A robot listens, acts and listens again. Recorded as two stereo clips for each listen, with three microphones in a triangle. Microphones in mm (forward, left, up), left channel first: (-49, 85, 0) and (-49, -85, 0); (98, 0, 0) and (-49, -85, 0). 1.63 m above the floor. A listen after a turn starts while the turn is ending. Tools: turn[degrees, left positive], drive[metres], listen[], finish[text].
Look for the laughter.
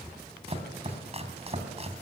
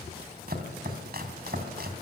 Action: listen[]
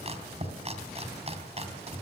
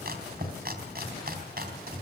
Action: listen[]
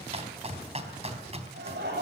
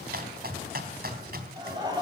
Thought: The laughter: 85° right.
Action: turn[-85]
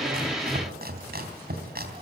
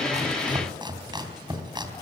Action: listen[]
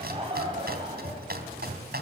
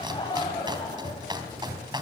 Thought: The laughter is now 35° right.
Action: turn[-35]
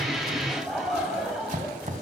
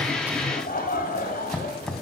Action: finish[Facing the laughter, over 4 m away.]